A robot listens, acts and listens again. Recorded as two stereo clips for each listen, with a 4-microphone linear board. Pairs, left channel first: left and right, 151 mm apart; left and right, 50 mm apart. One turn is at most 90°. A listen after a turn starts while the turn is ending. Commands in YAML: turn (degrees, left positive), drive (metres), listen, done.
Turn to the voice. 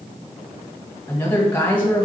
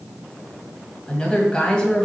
turn: 30
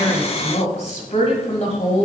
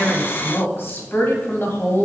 turn: 90
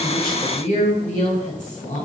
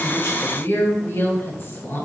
turn: 55
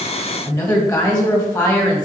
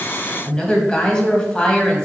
turn: 25
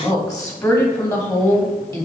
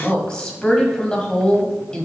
turn: 20
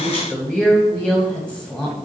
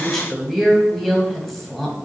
done: "Found it: a woman speaking, straight ahead."